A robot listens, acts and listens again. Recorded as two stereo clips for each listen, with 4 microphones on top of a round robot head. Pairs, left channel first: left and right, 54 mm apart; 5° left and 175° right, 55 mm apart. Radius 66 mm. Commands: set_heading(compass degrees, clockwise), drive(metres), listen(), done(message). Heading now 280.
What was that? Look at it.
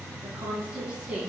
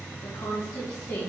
set_heading(295)
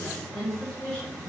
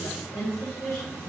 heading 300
set_heading(285)
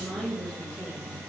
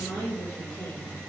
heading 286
set_heading(276)
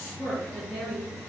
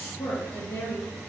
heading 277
set_heading(262)
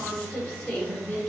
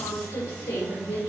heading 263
set_heading(253)
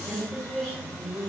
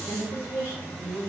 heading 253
done("Found it: a woman speaking, straight ahead.")